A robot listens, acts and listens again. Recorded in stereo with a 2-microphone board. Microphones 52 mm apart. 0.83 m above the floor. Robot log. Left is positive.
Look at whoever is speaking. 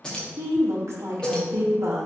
note: The woman speaking: about 65° right or 115° right.
cmd yaw -65
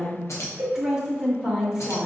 note: So it is at 15° right.
cmd yaw -15
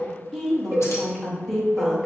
end: Facing the woman speaking.